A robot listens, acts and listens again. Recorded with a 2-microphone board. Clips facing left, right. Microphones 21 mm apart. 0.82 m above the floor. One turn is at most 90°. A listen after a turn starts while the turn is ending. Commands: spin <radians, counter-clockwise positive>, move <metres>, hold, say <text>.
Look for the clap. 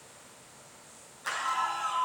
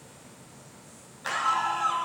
spin -0.61
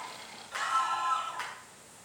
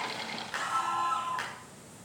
spin -1.57
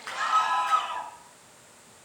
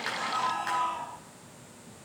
spin -0.35
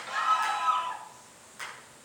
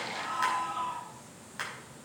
spin -0.79
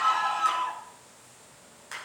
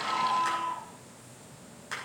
say Facing the clap.